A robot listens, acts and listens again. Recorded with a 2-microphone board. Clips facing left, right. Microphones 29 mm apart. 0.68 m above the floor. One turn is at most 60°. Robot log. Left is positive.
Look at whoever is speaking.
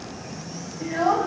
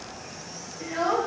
note: The child speaking: about 30° right or 150° right.
cmd yaw -30
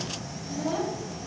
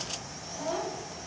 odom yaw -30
end: Found it: a child speaking, straight ahead, 2 to 4 m away.